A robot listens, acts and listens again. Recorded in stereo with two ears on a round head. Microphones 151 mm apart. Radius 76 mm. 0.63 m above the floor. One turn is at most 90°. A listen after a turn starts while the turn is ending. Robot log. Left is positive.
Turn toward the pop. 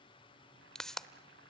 cmd yaw +30
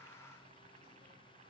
cmd idle
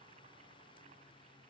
end: I heard a pop, but can't make it out now. It was about 25° right or 145° left.